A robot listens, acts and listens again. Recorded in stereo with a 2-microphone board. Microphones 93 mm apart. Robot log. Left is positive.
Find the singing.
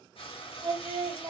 note: The singing: about 45° right or 135° right.
cmd yaw -45
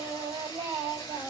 note: So it is at 80° right.
cmd yaw -80
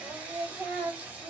note: The singing is now 25° right.
cmd yaw -25
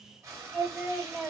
end: Found it: singing, straight ahead.